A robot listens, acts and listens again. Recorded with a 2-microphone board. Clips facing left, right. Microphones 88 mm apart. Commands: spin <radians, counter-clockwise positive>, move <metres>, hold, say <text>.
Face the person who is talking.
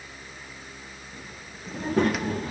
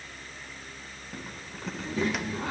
spin 0.96
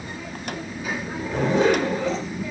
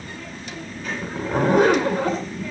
spin 0.17
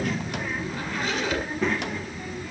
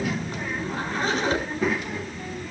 say Facing the child speaking.